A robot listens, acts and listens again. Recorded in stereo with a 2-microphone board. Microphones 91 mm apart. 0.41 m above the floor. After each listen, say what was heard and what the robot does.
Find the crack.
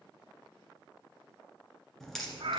Turn 30° left.
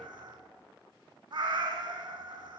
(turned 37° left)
Keep listening.
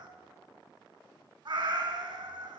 I heard a crack, but can't make it out now. It was about 35° right or 140° left.